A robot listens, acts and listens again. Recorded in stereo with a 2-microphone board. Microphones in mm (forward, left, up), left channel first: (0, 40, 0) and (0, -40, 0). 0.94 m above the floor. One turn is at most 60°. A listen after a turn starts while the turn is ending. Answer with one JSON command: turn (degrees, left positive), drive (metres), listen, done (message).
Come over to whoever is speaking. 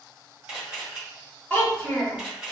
{"turn": 15}
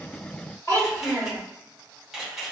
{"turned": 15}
{"turn": 60}
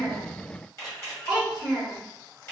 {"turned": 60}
{"turn": 60}
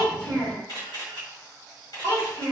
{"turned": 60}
{"turn": 55}
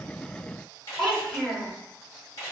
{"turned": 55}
{"turn": 10}
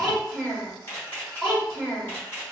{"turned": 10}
{"drive": 1.0}
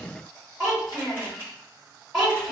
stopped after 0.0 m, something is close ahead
{"done": "Something is in my way. I am facing the child speaking but have not reached it."}